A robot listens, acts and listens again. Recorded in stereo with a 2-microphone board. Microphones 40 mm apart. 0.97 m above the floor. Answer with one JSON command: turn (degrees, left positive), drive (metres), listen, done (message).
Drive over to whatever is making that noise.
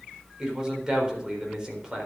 {"turn": -15}
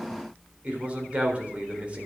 {"turn": -150}
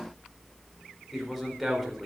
{"drive": 1.0}
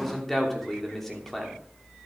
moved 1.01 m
{"drive": 1.0}
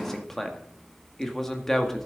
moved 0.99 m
{"drive": 1.0}
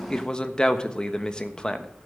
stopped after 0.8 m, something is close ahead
{"turn": 20}
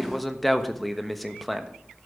{"done": "I am next to the man speaking."}